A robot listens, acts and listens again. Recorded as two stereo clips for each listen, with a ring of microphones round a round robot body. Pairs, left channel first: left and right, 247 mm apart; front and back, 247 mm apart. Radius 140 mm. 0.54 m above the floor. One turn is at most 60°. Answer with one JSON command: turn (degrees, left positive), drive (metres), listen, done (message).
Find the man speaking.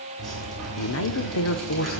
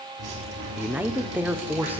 {"turn": 60}
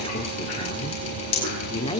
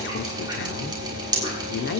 {"turn": 25}
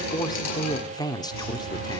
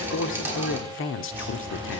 {"turn": 20}
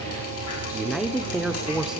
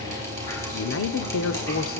{"done": "Facing the man speaking."}